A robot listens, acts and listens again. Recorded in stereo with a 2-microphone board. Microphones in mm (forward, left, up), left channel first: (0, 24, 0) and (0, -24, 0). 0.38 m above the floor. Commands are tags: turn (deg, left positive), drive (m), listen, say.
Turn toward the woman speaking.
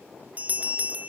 <listen/>
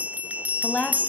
<turn deg="25"/>
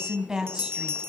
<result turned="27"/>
<turn deg="-15"/>
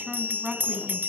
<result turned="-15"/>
<turn deg="-15"/>
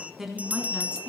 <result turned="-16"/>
<turn deg="-10"/>
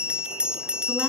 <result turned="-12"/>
<listen/>
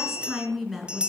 <say>Found it: a woman speaking, straight ahead, 2 to 4 m away.</say>